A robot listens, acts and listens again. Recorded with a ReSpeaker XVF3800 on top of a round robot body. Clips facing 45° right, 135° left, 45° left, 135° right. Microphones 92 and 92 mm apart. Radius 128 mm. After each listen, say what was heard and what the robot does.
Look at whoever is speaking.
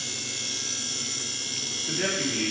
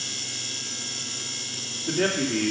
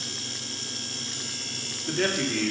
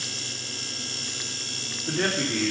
The man speaking: 155° left. Turn 155° left.
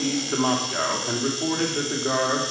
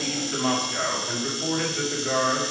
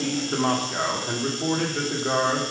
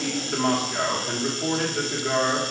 Facing the man speaking, 1 to 2 m away.